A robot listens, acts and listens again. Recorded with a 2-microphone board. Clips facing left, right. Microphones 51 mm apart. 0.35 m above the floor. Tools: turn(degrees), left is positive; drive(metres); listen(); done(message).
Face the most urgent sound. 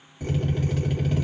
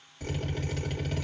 listen()
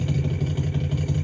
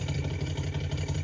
listen()
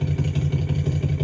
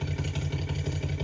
done("I can't make out anything urgent, only a drill.")